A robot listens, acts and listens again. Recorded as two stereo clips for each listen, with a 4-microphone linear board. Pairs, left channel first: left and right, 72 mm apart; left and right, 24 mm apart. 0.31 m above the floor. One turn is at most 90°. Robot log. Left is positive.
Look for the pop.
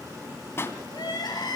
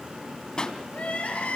note: The pop: about 35° left or 145° left.
cmd yaw +35
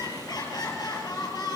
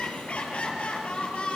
cmd idle
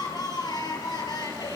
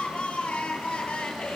end: I heard a pop, but can't make it out now. It was about straight ahead or 110° left.